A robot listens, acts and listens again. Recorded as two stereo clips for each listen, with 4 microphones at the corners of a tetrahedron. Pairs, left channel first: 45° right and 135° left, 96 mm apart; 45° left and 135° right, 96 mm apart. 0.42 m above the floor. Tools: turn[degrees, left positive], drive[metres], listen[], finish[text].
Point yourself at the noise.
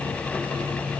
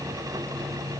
Action: listen[]
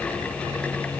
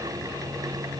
Action: listen[]
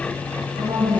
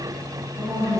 Thought: The woman speaking: 170° left.
Action: turn[170]
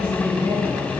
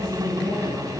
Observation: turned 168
Action: finish[Found it: a woman speaking, straight ahead.]